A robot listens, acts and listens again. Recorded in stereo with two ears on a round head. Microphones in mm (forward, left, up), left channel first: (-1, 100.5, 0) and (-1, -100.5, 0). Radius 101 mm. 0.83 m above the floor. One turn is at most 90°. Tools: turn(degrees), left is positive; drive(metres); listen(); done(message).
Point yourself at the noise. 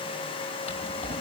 turn(degrees=30)
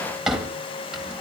done("Found it: a drawer, straight ahead, 2 to 4 m away.")